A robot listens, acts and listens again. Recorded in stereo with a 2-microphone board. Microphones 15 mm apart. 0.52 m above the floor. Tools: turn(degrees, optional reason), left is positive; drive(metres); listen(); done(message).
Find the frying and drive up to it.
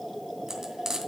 turn(degrees=-30, reason="The frying: about 30° right or 150° right.")
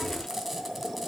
listen()
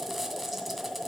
listen()
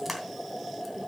drive(metres=1.0)
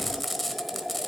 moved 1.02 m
drive(metres=1.0)
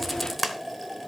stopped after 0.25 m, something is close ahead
done("I am next to the frying.")